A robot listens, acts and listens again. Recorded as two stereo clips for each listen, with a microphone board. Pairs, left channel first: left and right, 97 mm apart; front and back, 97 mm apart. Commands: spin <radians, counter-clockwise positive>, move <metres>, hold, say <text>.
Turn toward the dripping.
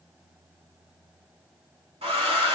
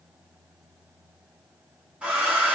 hold
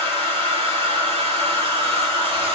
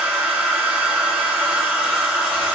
hold
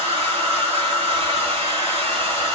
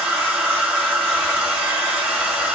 say I can't make out dripping to turn to.